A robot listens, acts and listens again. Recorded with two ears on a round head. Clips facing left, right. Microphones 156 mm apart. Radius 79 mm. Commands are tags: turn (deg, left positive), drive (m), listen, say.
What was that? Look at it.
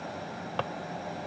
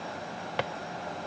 <turn deg="-15"/>
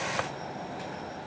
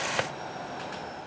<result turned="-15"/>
<listen/>
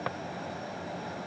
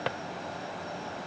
<turn deg="-150"/>
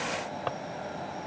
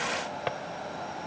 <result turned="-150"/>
<turn deg="-20"/>
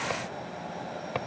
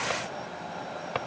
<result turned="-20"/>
<say>Facing the drawer.</say>